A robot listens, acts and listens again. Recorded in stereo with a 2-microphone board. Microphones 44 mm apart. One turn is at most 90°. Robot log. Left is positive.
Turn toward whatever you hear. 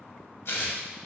note: The tearing paper: about 60° left or 120° left.
cmd yaw +60
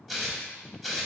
end: Facing the tearing paper, under 1 m away.